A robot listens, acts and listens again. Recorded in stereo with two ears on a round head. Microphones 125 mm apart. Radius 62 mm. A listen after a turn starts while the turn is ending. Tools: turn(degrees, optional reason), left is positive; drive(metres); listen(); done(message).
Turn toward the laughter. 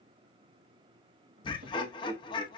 turn(degrees=35, reason="The laughter: about 35° left or 145° left.")
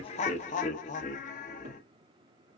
turn(degrees=105, reason="So it is at 105° left.")
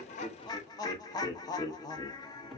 turn(degrees=30, reason="The laughter is now 30° left.")
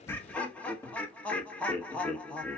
turn(degrees=10, reason="The laughter is now 10° left.")
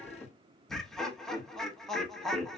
done("Found it: laughter, straight ahead, under 1 m away.")